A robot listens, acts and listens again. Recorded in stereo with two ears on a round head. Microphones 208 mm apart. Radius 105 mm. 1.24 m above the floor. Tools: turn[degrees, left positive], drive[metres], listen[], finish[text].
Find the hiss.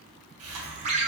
Thought: The hiss: about 70° right or 110° right.
Action: turn[-70]
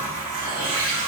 Thought: So it is at 35° right.
Action: turn[-35]
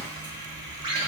Thought: The hiss is now 20° left.
Action: turn[20]
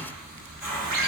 Action: finish[Found it: a hiss, straight ahead, 1 to 2 m away.]